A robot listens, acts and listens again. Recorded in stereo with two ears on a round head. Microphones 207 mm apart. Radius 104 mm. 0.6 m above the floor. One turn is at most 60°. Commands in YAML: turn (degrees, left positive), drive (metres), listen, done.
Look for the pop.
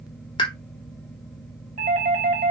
turn: 20
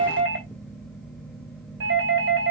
listen: true
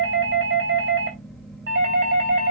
done: "I heard a pop, but can't make it out now. It was about straight ahead or 140° left."